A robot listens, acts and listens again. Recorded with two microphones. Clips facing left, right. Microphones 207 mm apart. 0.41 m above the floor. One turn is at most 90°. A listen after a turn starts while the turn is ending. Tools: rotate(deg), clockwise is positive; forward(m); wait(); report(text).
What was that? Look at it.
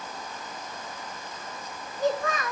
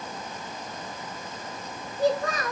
rotate(35)
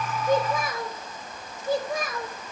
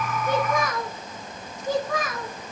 rotate(90)
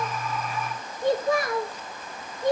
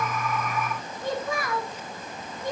rotate(-40)
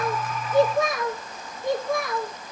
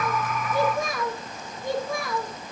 report("Facing the child speaking, over 4 m away.")